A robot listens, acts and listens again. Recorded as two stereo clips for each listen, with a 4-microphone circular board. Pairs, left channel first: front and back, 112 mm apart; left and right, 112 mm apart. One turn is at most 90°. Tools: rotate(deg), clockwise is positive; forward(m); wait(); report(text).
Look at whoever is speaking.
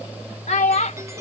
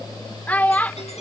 rotate(-15)
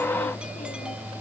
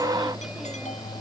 wait()
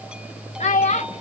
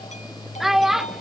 report("Facing the child speaking.")